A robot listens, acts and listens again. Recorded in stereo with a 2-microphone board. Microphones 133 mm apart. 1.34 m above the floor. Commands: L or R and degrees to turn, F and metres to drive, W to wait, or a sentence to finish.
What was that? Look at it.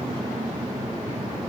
W
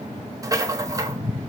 R25
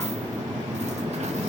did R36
W
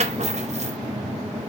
R120
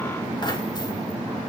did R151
L35
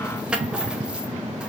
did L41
Facing the rattle, under 1 m away.